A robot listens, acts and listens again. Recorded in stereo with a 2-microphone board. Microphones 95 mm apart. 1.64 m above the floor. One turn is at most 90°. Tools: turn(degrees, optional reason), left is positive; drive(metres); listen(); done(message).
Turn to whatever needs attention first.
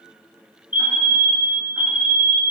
turn(degrees=-20, reason="The fire alarm: about 20° right or 160° right.")
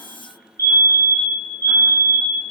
turn(degrees=-90, reason="So it is at 140° right.")
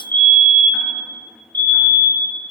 turn(degrees=-50, reason="The fire alarm is now 50° right.")
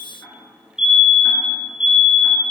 turn(degrees=-10, reason="The fire alarm is now 10° right.")
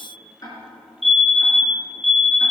done("Facing the fire alarm, 1 to 2 m away.")